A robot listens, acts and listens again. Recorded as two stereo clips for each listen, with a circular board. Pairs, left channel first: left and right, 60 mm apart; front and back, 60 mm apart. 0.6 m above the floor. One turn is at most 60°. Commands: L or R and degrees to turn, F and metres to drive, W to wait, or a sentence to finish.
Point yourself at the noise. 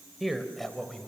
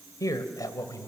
Found it: a man speaking, straight ahead.